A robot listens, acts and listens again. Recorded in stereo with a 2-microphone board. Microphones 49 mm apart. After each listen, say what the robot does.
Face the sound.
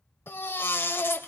Turn 50° left.
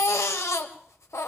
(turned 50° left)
Turn 80° left.
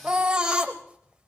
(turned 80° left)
Turn 20° right.
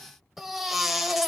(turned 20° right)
Facing the baby crying.